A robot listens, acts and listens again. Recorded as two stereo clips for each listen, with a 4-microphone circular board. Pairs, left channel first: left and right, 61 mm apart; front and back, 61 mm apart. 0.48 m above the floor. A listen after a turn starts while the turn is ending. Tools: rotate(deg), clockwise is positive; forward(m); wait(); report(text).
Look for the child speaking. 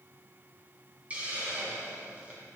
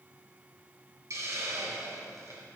wait()
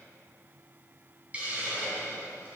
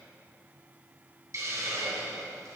wait()
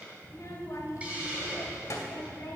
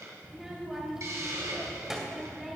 rotate(-95)
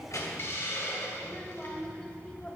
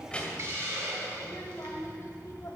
rotate(-20)
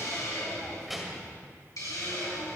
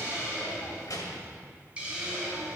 report("Facing the child speaking.")